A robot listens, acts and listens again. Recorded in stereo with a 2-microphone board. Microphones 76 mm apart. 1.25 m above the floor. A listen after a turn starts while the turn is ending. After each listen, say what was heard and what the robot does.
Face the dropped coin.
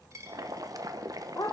The dropped coin: about 40° right or 140° right. Turn 40° right.
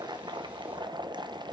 Keep listening.
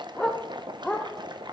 I heard a dropped coin, but can't make it out now. It was about straight ahead or 100° right.